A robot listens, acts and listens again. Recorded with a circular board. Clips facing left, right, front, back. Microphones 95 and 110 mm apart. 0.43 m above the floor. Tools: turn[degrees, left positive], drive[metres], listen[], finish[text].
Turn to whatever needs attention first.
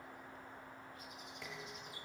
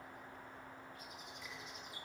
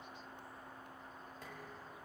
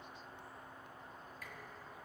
Action: listen[]
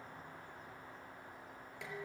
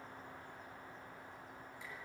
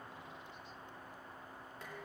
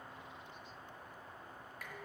Action: listen[]
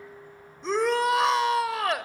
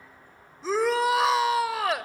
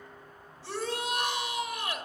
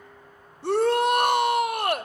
Thought: The shout: straight behind.
Action: turn[180]
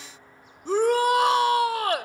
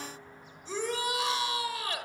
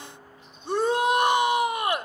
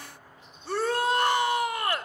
Thought: The shout is now 70° left.
Action: turn[70]
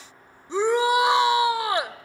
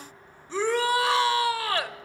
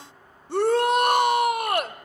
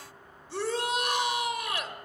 Thought: The shout is now 20° left.
Action: turn[20]
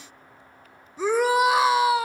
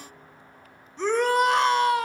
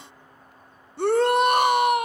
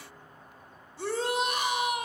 Action: finish[Found it: a shout, straight ahead, 1 to 2 m away.]